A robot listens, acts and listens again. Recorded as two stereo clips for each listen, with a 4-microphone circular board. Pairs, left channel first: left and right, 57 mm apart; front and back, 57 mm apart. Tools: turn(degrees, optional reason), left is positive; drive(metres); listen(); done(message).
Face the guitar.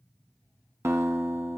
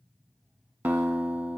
turn(degrees=-125, reason="The guitar: 125° right.")
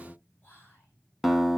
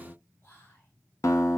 done("Facing the guitar.")